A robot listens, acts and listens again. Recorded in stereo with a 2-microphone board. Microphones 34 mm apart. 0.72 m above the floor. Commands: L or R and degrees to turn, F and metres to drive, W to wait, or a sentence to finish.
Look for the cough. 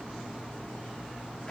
W
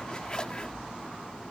W
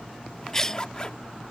L15
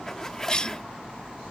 L155
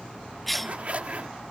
Facing the cough.